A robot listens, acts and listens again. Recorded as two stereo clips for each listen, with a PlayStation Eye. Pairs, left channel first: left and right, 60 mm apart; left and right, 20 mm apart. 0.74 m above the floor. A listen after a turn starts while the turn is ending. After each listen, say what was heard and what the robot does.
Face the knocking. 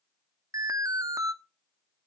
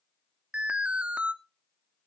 Keep listening.
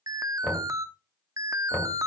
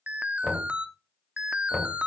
The knocking: about 20° left or 160° left. Turn 20° left.
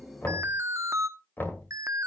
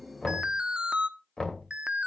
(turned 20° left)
So it is at 145° left. Turn 145° left.
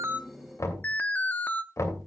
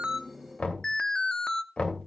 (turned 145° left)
The knocking is now 60° left. Turn 60° left.
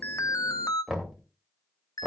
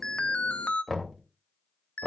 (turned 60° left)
The knocking is now 15° right. Turn 15° right.
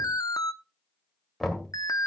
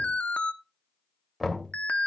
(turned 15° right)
Found it: knocking, straight ahead, 2 to 4 m away.